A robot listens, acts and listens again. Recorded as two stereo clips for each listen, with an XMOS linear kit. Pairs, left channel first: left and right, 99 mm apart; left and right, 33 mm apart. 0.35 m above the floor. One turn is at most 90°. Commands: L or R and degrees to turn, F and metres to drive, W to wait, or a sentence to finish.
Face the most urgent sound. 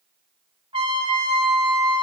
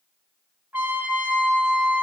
W
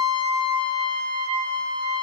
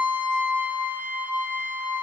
W
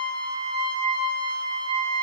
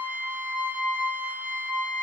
I can't make out anything urgent, only a trumpet.